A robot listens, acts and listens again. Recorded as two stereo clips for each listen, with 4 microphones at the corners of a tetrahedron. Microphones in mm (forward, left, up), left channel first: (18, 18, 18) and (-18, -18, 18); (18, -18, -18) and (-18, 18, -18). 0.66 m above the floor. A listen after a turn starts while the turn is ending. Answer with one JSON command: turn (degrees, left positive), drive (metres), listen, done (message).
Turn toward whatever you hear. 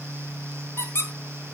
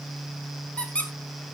{"turn": 20}
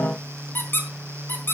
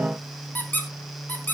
{"done": "Found it: a squeak, straight ahead, 2 to 4 m away."}